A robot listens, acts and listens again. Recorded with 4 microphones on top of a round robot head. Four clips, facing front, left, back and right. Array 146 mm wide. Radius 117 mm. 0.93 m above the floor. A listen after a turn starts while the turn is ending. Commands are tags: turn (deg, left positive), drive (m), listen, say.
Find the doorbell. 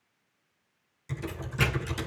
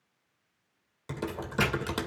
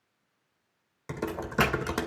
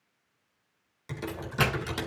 <turn deg="-155"/>
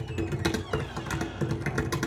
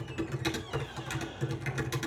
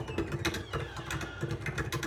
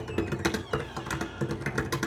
<listen/>
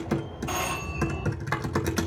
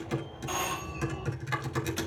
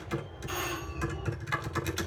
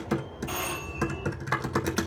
<say>Found it: a doorbell, straight ahead, over 4 m away.</say>